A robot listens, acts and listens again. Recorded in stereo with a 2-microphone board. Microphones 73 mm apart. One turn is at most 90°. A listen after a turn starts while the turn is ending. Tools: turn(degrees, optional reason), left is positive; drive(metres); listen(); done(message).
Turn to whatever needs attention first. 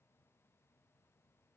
listen()
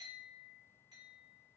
listen()
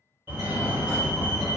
turn(degrees=-30, reason="The fire alarm: about 30° right or 150° right.")
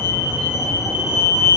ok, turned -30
turn(degrees=-90, reason="So it is at 115° right.")
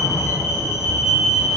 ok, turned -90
turn(degrees=-25, reason="The fire alarm is now 25° right.")
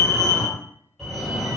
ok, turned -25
done("Found it: a fire alarm, straight ahead, 1 to 2 m away.")